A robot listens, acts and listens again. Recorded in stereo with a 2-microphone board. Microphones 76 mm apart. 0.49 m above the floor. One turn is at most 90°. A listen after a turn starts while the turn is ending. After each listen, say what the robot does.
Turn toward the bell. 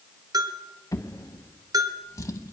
Turn 55° right.
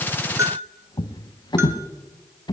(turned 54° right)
Turn 40° right.
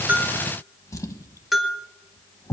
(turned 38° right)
Facing the bell, 1 to 2 m away.